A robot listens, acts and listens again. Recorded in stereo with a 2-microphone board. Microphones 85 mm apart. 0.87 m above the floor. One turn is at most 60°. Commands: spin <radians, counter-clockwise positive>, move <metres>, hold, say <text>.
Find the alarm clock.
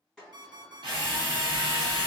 spin -0.79
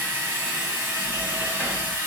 hold
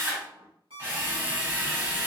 spin -1.05
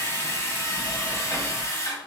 spin -0.52
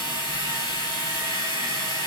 hold
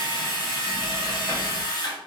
say I heard an alarm clock from this way, but can't make it out now.